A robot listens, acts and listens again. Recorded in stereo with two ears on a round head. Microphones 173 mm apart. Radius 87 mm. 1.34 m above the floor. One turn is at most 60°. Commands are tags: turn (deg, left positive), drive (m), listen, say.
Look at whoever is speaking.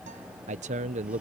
<turn deg="-40"/>
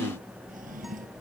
<listen/>
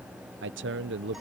<turn deg="-60"/>
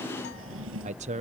<turn deg="-40"/>
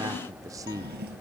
<turn deg="-20"/>
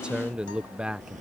<say>Found it: a man speaking, straight ahead.</say>